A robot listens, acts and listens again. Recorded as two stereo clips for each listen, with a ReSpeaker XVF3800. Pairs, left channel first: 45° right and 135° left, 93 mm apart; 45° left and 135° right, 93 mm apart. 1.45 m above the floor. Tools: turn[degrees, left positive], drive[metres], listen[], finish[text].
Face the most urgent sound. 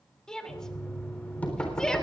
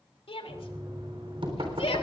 Thought: The shout: 40° left.
Action: turn[40]
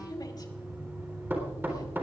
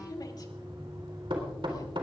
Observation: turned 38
Action: finish[Found it: a shout, straight ahead.]